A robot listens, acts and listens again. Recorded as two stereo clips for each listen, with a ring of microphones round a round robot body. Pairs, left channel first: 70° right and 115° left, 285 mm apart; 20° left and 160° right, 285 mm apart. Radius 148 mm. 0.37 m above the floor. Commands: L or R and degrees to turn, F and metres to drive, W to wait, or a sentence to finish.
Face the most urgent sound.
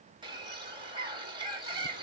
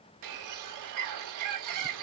W
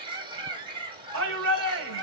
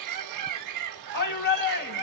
L70
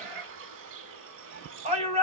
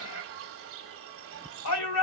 L45
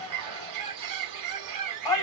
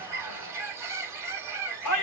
Facing the shout, 1 to 2 m away.